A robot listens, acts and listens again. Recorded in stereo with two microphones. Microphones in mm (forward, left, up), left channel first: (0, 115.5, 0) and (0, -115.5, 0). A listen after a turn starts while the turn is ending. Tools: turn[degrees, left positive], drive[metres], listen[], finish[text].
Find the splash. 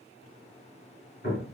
Action: listen[]
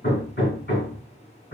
Action: listen[]
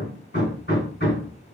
Action: finish[I can't make out a splash, only hammering.]